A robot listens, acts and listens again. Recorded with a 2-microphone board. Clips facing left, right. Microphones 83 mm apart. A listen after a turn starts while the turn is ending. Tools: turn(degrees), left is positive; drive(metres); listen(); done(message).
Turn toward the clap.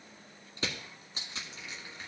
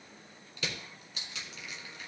listen()
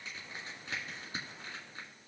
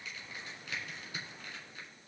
listen()
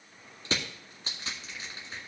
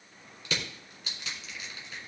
done("I can't make out a clap, only crushing.")